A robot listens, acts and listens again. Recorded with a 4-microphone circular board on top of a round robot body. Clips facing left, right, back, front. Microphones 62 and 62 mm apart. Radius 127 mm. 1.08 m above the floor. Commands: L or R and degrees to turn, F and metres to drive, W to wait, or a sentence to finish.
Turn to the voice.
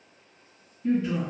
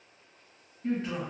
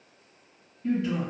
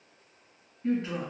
R50
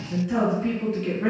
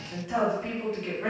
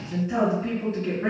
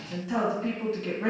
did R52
Facing the woman speaking, 1 to 2 m away.